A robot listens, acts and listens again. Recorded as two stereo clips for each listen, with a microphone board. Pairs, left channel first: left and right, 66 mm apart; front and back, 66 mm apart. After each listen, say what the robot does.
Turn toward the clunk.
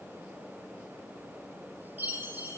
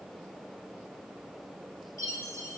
Keep listening.
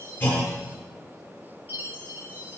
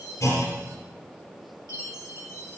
Turn 25° left.
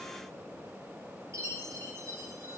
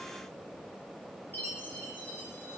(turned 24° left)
Facing where the clunk came from. I can't hear it now.